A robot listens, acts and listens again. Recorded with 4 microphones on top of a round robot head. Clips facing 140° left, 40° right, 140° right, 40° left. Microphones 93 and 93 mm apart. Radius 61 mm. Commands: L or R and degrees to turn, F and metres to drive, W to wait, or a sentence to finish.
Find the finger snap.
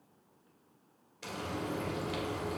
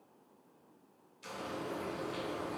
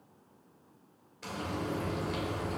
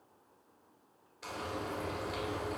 W
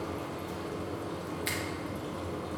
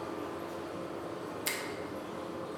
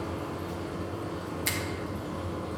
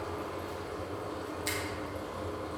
R95
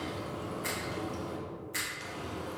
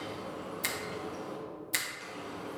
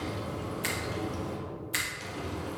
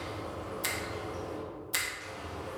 R25
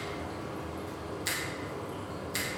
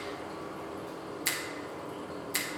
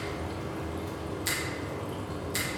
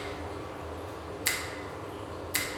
Found it: a finger snap, straight ahead, under 1 m away.